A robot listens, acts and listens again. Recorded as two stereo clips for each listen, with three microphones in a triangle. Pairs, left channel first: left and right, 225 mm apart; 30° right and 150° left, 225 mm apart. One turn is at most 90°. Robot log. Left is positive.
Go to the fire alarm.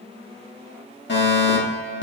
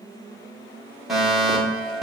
note: The fire alarm: 60° left.
cmd yaw +60
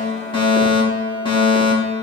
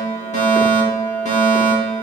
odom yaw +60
note: The fire alarm is now 25° left.
cmd yaw +25
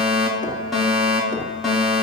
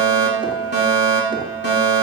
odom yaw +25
cmd fwd 1.0
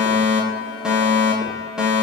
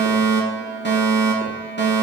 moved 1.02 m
cmd fwd 1.0
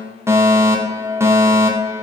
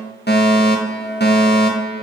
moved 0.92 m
note: The fire alarm is now 15° right.
cmd yaw -15
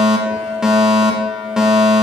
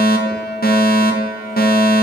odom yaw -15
cmd fwd 1.0
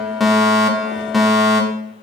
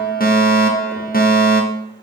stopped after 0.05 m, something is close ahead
end: Arrived at the fire alarm, straight ahead.